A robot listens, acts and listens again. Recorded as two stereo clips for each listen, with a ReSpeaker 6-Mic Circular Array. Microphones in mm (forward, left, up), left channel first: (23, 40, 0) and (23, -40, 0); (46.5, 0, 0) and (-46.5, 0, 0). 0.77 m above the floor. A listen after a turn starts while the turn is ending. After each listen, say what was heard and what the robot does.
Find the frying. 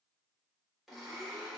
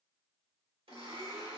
Keep listening.
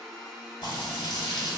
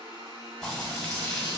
The frying: 80° left. Turn 80° left.
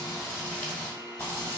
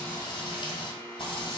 The frying is now 20° left. Turn 20° left.
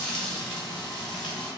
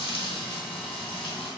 Found it: frying, straight ahead.